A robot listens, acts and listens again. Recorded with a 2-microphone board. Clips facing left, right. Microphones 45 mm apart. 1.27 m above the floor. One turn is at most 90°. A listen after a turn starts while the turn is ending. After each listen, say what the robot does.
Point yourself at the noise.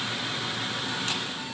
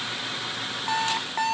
Turn 90° right.
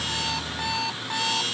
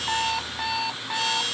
Facing the alarm clock.